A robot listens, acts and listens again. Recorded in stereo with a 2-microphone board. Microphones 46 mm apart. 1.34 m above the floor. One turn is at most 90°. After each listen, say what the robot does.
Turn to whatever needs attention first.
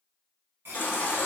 Turn 50° left.
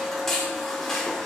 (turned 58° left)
Turn 10° left.
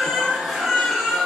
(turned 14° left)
Facing the baby crying.